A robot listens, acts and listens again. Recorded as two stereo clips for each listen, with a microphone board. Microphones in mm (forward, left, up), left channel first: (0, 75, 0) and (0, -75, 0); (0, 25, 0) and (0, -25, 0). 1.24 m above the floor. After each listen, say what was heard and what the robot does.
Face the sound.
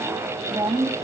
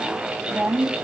The woman speaking: about 25° right or 155° right. Turn 25° right.
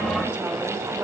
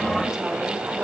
Keep listening.
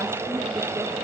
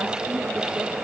Keep listening.
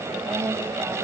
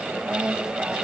The woman speaking: about 15° right or 165° right. Turn 15° right.
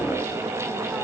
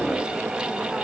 Keep listening.
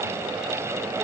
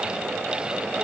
Keep listening.
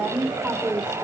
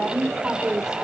Turn 30° right.
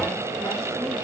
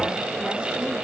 Keep listening.
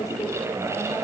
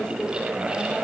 Keep listening.
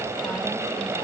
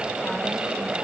I heard a woman speaking, but can't make it out now. It was about 25° left or 145° right.